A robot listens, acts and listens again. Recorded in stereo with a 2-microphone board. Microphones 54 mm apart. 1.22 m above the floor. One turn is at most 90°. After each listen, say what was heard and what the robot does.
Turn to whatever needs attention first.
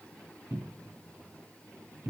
Keep listening.
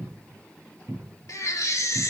The baby crying: about 70° left or 110° left. Turn 70° left.
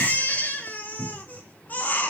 So it is at 30° left. Turn 30° left.
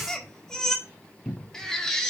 The baby crying is now 10° left. Turn 10° left.
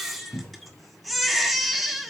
Facing the baby crying, 1 to 2 m away.